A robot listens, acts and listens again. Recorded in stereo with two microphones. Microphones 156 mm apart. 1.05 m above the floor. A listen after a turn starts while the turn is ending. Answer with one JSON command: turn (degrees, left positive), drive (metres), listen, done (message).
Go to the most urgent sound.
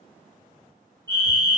{"turn": -25}
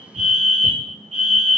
{"turn": -130}
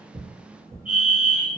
{"turn": 40}
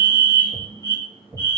{"turn": 20}
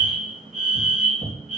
{"drive": 1.0}
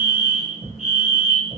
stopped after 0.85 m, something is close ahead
{"turn": -10}
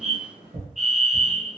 {"done": "I am next to the fire alarm."}